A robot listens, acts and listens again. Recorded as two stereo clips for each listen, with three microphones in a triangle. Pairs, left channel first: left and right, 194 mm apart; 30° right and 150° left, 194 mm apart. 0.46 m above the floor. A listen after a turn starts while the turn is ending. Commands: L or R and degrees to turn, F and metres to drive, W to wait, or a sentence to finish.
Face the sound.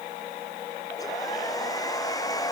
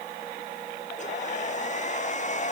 L20
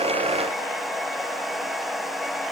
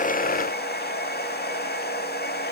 Found it: a hair dryer, straight ahead.